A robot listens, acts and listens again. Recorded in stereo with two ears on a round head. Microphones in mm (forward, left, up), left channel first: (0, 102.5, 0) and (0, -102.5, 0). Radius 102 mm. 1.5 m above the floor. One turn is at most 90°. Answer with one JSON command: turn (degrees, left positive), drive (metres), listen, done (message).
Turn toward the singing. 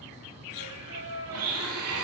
{"turn": -65}
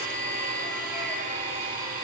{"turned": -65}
{"listen": true}
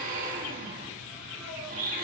{"listen": true}
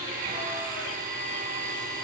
{"done": "I heard singing, but can't make it out now. It was about straight ahead or 50° right."}